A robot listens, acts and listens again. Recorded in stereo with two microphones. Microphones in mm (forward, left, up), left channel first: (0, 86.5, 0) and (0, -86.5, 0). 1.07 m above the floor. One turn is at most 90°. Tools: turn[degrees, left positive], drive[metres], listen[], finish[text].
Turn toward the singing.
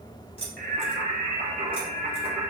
Thought: The singing: about 30° right or 150° right.
Action: turn[-30]
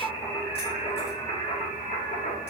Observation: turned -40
Thought: So it is at 50° left.
Action: turn[50]
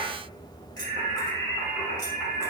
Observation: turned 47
Thought: The singing is now 25° left.
Action: turn[25]
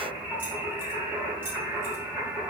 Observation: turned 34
Thought: The singing is now 10° right.
Action: turn[-10]
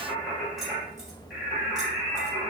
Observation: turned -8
Action: finish[Facing the singing, 2 to 4 m away.]